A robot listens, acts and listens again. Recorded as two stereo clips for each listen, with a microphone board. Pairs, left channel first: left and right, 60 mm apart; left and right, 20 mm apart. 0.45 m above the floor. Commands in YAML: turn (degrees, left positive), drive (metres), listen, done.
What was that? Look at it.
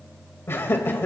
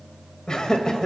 turn: 40
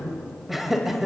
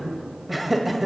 done: "Found it: laughter, straight ahead, 2 to 4 m away."